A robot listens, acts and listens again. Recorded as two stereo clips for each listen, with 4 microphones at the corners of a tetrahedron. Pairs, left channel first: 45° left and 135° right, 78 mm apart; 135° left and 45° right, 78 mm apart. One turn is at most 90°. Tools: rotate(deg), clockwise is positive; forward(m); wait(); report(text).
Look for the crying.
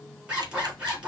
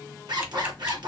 wait()
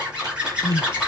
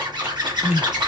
rotate(-30)
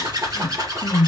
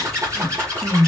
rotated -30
report("Found it: crying, straight ahead.")